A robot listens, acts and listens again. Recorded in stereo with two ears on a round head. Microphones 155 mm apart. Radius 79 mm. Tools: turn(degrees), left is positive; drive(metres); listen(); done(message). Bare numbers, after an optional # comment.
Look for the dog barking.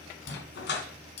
# The dog barking: about 70° left or 110° left.
turn(70)
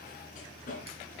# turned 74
# So it is at 45° left.
turn(45)
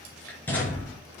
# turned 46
# The dog barking is now 10° left.
turn(10)
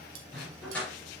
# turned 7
# The dog barking is now 10° left.
turn(10)
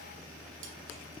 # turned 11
listen()
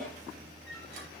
done("Facing the dog barking, over 4 m away.")